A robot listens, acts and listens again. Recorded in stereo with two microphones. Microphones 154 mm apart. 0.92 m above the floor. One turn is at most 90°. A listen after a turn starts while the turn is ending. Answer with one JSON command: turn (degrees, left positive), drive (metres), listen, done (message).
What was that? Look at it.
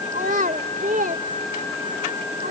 {"turn": -70}
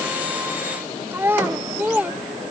{"turn": -10}
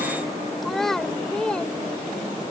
{"done": "Found it: a child speaking, straight ahead."}